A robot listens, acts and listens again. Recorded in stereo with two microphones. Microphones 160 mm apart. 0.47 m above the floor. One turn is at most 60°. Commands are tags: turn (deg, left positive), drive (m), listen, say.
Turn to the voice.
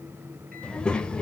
<turn deg="30"/>
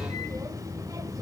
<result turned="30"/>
<turn deg="-20"/>
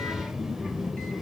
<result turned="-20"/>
<say>Facing the child speaking, under 1 m away.</say>